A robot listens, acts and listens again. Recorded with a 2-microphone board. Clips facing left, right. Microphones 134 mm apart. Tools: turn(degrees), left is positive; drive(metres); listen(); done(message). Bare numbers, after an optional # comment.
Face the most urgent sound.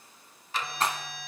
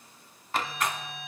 # The alarm: about 65° left or 115° left.
turn(65)
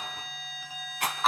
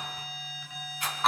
# So it is at 35° left.
turn(35)
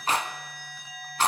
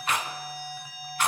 # The alarm is now 10° right.
turn(-10)
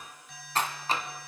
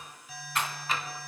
done("Found it: an alarm, straight ahead, 2 to 4 m away.")